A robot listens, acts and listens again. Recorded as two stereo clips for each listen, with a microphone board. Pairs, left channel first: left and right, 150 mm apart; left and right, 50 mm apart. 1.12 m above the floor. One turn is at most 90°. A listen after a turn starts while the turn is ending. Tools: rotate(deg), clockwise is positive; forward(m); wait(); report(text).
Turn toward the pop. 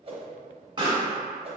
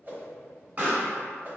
rotate(30)
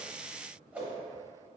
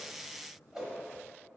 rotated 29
wait()
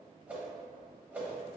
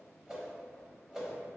report("I heard a pop, but can't make it out now. It was about 5° right or 120° right.")